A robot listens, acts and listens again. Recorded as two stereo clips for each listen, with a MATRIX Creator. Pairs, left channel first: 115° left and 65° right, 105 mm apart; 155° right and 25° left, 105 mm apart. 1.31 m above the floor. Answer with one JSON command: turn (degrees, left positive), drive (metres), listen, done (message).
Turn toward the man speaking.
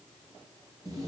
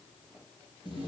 {"listen": true}
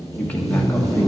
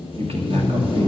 {"turn": 35}
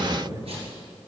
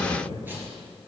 {"turn": -10}
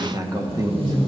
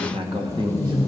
{"turn": -15}
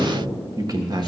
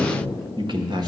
{"turn": -20}
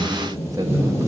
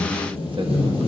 {"turn": -15}
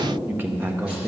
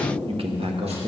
{"done": "Facing the man speaking, 1 to 2 m away."}